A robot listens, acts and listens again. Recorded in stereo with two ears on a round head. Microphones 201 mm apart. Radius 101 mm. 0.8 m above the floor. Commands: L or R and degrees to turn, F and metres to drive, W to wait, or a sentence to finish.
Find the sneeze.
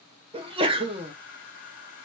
R25
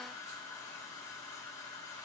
W
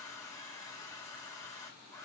I heard a sneeze, but can't make it out now. It was about straight ahead or 130° right.